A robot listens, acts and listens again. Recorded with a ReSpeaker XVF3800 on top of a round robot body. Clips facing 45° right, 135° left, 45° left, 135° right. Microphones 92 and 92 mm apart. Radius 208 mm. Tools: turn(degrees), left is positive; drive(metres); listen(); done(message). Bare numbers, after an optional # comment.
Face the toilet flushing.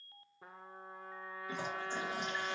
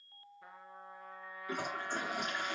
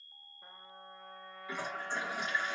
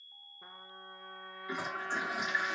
# The toilet flushing: 150° left.
turn(150)
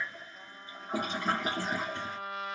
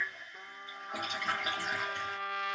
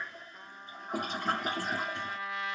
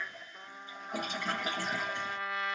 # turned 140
# The toilet flushing is now 10° left.
turn(10)
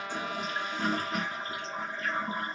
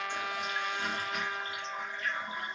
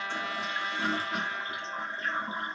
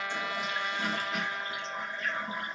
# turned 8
done("Found it: a toilet flushing, straight ahead.")